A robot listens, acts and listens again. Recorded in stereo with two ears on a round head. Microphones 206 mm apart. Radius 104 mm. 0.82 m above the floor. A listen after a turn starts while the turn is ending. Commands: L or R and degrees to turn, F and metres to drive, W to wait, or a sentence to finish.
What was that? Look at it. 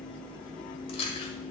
L25
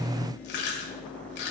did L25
L130
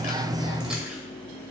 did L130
W
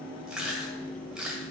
Facing the chewing, 1 to 2 m away.